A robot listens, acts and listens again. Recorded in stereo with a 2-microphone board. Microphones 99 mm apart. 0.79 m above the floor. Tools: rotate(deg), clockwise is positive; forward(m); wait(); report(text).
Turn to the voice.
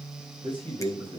rotate(50)
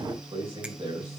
rotate(80)
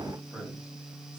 rotate(10)
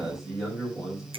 report("Found it: a man speaking, straight ahead.")